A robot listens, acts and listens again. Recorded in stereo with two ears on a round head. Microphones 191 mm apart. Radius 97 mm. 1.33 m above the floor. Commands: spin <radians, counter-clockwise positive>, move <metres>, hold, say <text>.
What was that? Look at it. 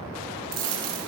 spin -1.57
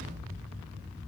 say Facing where the dropped coin came from. I can't hear it now.